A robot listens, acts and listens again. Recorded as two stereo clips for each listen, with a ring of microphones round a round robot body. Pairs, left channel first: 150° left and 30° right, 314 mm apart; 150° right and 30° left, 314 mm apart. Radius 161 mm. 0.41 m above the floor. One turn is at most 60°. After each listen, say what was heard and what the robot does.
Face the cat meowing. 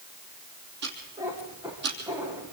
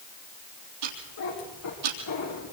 The cat meowing: 110° right. Turn 60° right.
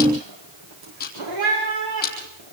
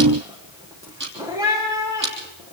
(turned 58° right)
The cat meowing is now 50° right. Turn 50° right.
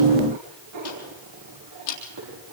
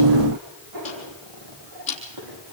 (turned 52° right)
Found it: a cat meowing, straight ahead.